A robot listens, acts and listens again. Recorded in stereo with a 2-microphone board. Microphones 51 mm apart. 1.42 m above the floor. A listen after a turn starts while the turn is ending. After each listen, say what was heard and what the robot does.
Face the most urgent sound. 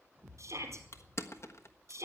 The shout: about 70° right or 110° right. Turn 70° right.
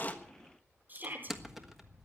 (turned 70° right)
So it is at 40° right. Turn 40° right.
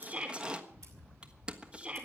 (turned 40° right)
The shout is now 25° right. Turn 25° right.
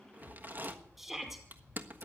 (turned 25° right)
Found it: a shout, straight ahead.